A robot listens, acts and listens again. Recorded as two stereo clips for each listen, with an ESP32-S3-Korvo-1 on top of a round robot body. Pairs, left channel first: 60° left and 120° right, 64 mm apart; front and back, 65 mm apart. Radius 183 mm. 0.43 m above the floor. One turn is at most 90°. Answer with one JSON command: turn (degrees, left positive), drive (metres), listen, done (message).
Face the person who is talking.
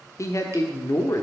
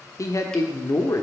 {"turn": 25}
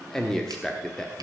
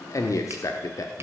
{"turn": -25}
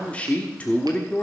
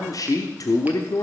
{"turn": -10}
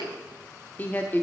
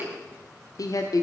{"done": "Found it: a man speaking, straight ahead."}